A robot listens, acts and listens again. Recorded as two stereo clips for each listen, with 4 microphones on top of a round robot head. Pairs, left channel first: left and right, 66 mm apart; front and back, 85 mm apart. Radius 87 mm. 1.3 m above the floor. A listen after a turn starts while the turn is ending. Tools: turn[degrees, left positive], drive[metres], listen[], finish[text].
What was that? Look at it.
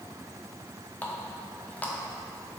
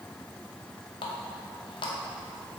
Thought: The running tap: 25° left.
Action: turn[25]
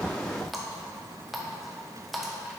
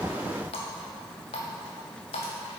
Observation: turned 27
Action: finish[Facing the running tap, under 1 m away.]